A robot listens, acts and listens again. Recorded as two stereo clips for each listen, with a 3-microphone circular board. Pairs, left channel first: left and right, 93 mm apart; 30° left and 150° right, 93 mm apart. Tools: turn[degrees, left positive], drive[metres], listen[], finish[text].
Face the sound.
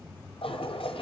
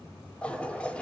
Thought: The toilet flushing: 110° left.
Action: turn[110]
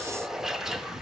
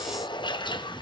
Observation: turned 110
Action: finish[Found it: a toilet flushing, straight ahead, under 1 m away.]